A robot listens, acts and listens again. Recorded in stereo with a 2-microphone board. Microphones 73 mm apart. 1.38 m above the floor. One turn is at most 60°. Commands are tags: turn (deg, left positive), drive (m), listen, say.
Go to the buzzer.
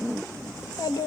<listen/>
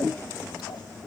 <listen/>
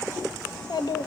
<say>I can't make out a buzzer to turn to.</say>